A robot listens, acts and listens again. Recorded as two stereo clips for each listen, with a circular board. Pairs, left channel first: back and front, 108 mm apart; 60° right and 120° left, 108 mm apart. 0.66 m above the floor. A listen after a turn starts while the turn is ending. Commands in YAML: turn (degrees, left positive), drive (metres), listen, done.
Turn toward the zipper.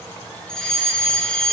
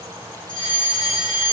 listen: true
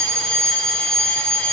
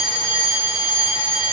listen: true
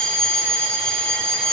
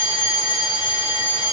done: "I can't make out a zipper to turn to."